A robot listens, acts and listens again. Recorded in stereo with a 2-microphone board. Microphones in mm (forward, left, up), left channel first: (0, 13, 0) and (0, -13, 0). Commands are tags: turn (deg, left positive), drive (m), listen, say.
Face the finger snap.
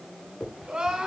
<turn deg="50"/>
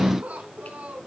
<listen/>
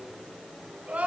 <listen/>
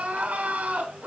<say>I heard a finger snap, but can't make it out now. It was about straight ahead or 80° left.</say>